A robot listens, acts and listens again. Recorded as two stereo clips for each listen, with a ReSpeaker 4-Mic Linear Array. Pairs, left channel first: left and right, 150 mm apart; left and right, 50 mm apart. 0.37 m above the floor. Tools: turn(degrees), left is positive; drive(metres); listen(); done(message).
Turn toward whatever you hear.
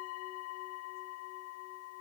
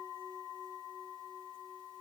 listen()
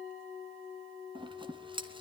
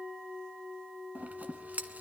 turn(degrees=-35)
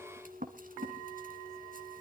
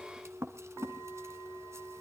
turn(degrees=-110)
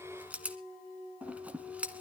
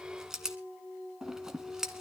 turn(degrees=-10)
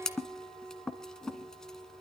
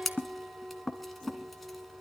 done("Found it: scissors, straight ahead, 1 to 2 m away.")